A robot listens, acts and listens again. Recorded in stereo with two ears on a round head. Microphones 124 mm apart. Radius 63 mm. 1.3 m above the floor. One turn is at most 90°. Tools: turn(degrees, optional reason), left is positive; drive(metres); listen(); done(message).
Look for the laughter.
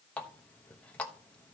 listen()
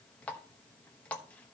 listen()
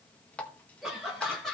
turn(degrees=30)
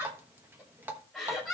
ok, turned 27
turn(degrees=30)
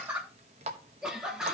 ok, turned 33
turn(degrees=-10, reason="So it is at 10° right.")
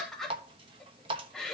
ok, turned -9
done("Found it: laughter, straight ahead.")